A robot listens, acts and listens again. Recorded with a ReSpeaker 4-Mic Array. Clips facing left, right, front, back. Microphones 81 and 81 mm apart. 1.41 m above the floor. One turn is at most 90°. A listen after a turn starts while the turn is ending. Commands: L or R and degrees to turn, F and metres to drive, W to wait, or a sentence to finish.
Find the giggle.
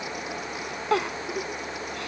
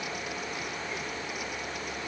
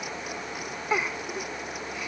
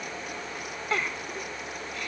L75
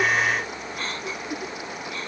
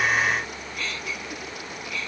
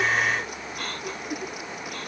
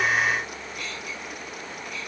W
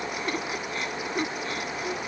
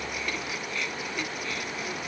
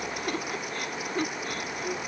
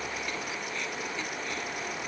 L35
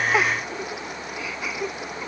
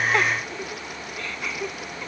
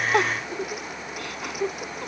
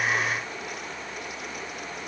Found it: a giggle, straight ahead.